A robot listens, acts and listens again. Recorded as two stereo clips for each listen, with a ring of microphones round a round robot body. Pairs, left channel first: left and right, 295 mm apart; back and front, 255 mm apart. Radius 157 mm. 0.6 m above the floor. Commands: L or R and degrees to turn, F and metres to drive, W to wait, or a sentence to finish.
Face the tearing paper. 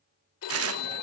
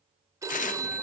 R125
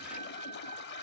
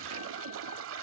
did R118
W
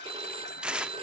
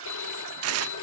Facing the tearing paper.